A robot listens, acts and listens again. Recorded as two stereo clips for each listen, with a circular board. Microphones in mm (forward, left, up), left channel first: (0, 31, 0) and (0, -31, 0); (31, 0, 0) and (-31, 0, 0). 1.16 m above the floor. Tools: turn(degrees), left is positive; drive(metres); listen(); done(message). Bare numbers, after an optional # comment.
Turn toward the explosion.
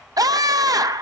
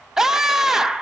listen()
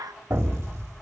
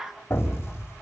# The explosion: 50° right.
turn(-50)
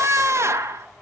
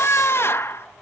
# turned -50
done("I heard an explosion from this way, but can't make it out now.")